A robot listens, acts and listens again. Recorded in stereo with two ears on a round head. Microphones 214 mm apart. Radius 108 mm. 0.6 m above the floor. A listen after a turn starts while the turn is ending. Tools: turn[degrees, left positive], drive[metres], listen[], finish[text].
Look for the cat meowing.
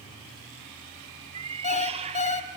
Thought: The cat meowing: about 25° right or 155° right.
Action: turn[-25]
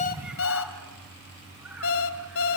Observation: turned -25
Action: listen[]
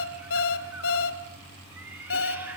Action: finish[Facing the cat meowing.]